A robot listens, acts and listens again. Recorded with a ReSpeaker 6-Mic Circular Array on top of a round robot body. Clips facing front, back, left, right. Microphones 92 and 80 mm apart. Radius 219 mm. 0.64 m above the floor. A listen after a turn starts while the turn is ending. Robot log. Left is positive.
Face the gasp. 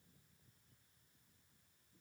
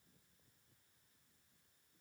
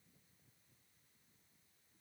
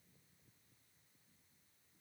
cmd idle
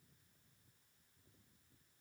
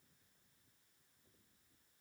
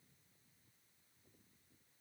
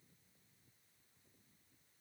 cmd idle
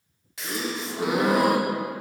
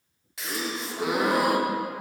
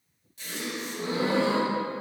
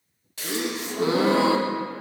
note: The gasp: 90° right.
cmd yaw -90
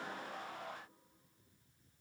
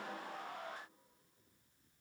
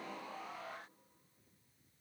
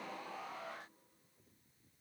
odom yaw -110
note: Nothing new. It was at 20° left.
cmd yaw +20
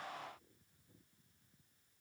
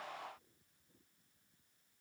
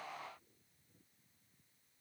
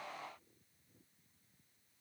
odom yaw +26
end: I heard a gasp from this way, but can't make it out now.